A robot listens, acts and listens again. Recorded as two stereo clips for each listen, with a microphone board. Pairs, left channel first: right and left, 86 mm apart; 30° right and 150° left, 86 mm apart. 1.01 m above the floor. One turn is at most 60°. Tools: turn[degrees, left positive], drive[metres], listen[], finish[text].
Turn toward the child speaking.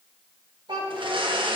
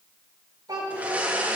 Thought: The child speaking: 105° left.
Action: turn[60]
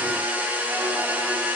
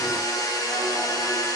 Thought: Nothing new. It was at 45° left.
Action: turn[45]
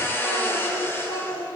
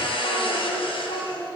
Thought: The child speaking is now 50° right.
Action: turn[-50]
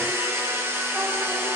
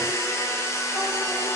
Action: listen[]
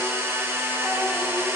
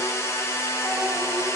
Action: listen[]
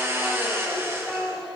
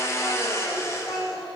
Action: finish[Facing the child speaking.]